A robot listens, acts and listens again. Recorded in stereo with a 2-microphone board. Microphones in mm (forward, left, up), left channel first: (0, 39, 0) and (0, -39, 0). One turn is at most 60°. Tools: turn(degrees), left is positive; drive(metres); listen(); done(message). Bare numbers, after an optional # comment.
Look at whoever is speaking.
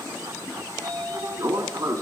listen()
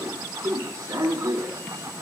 listen()
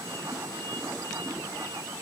done("I can't make out anyone speaking to turn to.")